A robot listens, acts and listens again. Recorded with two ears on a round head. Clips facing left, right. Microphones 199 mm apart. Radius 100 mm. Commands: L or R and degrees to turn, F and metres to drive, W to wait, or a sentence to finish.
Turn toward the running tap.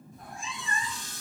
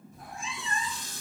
R65
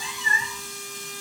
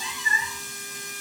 W
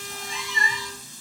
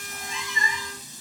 R15
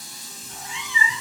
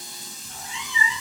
Found it: a running tap, straight ahead, under 1 m away.